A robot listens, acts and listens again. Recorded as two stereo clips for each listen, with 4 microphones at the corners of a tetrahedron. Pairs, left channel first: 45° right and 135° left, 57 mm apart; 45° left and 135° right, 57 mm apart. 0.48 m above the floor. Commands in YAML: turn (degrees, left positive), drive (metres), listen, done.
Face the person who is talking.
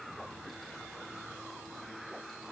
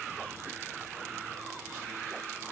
listen: true
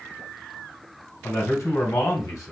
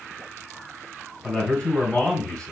turn: -30
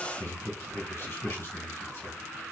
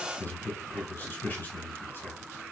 turn: -10
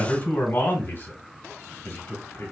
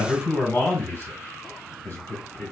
done: "Found it: a man speaking, straight ahead, 2 to 4 m away."